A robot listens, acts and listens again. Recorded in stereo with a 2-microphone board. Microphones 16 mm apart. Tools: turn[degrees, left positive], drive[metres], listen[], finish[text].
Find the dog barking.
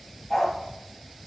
Action: turn[30]
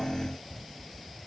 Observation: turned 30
Action: listen[]
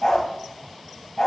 Thought: So it is at 140° left.
Action: turn[140]
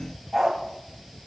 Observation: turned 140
Thought: The dog barking is now 25° right.
Action: turn[-25]
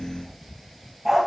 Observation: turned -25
Action: finish[Found it: a dog barking, straight ahead, 2 to 4 m away.]